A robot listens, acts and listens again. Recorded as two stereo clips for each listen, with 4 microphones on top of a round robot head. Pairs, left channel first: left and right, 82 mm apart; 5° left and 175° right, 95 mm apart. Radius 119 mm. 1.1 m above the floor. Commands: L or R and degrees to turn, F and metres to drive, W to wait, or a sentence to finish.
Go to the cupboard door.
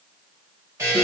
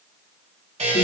W
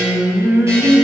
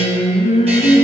W
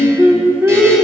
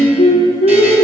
I can't make out a cupboard door, only a buzzer and singing.